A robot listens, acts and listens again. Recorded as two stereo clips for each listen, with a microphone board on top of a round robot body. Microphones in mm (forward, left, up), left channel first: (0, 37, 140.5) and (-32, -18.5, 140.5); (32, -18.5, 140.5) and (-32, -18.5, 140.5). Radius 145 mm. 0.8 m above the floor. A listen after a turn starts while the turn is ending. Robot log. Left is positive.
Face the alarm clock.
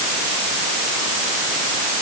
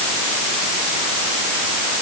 cmd idle
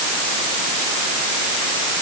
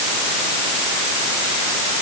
cmd idle
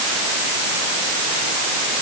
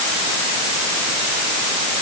end: I can't make out an alarm clock.